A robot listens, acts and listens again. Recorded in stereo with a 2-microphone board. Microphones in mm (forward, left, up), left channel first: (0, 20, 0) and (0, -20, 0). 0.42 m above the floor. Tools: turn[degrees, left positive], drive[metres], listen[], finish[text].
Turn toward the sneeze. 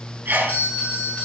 Thought: The sneeze: about 50° right or 130° right.
Action: turn[-50]
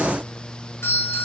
Action: listen[]
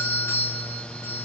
Action: finish[I heard a sneeze, but can't make it out now. It was about straight ahead or 80° right.]